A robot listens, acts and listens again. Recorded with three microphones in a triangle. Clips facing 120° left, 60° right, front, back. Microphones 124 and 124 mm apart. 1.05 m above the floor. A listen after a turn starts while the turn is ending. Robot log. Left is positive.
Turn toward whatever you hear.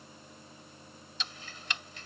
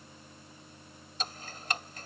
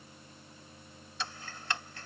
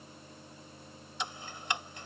note: The ticking: 110° right.
cmd yaw -110
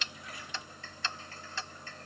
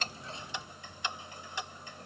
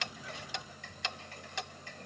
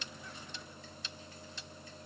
note: The ticking is now 15° left.
cmd yaw +15
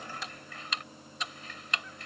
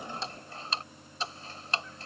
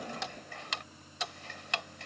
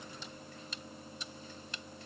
end: Facing the ticking.